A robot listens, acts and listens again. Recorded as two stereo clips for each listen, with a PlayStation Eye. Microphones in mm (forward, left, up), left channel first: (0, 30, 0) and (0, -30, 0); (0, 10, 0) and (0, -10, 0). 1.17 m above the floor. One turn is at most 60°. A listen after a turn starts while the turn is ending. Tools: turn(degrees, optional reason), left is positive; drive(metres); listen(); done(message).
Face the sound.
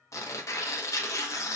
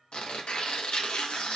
turn(degrees=55, reason="The tearing paper: about 55° left or 125° left.")
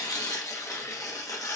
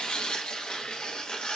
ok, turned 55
turn(degrees=60, reason="So it is at 65° left.")
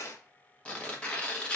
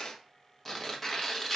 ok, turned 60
turn(degrees=20, reason="The tearing paper is now 20° left.")
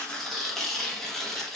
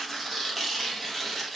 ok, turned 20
done("Facing the tearing paper, under 1 m away.")